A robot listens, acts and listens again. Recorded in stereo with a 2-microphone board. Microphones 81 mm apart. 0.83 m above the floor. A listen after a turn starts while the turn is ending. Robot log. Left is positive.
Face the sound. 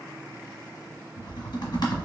note: The typing on a keyboard: about 60° left or 120° left.
cmd yaw +60
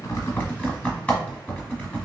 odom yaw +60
note: So it is at 20° left.
cmd yaw +20
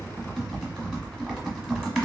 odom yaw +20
end: Found it: typing on a keyboard, straight ahead, 1 to 2 m away.